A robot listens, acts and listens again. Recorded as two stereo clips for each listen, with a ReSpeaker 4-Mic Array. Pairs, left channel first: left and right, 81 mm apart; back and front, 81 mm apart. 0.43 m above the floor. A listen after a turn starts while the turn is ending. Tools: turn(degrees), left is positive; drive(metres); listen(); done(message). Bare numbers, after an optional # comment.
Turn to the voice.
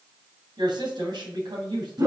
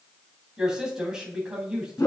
# The woman speaking: 80° right.
turn(-80)
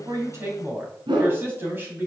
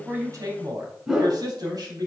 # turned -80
# The woman speaking is now 30° right.
turn(-30)
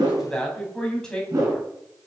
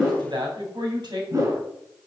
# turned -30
# The woman speaking is now 10° left.
turn(10)
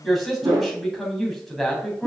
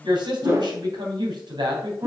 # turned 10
done("Found it: a woman speaking, straight ahead, 2 to 4 m away.")